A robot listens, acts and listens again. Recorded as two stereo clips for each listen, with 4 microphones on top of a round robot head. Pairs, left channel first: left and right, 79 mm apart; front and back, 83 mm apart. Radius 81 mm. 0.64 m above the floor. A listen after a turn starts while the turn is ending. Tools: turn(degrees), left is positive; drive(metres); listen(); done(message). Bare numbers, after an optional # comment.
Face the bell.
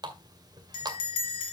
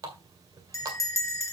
# The bell: 50° left.
turn(50)
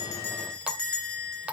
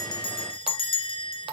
# The bell is now 10° left.
turn(10)
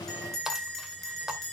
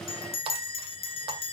done("Found it: a bell, straight ahead, 2 to 4 m away.")